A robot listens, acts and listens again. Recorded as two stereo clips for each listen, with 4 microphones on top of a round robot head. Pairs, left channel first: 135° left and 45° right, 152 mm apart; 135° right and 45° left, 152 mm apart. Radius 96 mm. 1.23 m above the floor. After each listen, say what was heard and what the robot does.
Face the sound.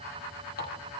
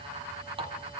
The running tap: 105° left. Turn 105° left.
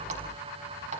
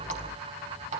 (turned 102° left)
Facing the running tap, over 4 m away.